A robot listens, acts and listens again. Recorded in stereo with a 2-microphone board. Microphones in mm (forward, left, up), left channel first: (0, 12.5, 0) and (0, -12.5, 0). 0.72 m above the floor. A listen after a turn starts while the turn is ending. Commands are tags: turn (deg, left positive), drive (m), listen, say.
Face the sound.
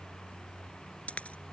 <turn deg="75"/>
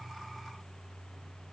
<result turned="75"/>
<listen/>
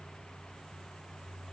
<say>I heard a dropped coin, but can't make it out now. It was about straight ahead or 30° left.</say>